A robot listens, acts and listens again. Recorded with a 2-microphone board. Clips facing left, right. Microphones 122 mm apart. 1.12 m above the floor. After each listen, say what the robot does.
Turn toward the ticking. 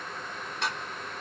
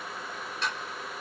Turn 90° left.
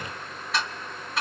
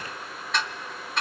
Facing the ticking, 2 to 4 m away.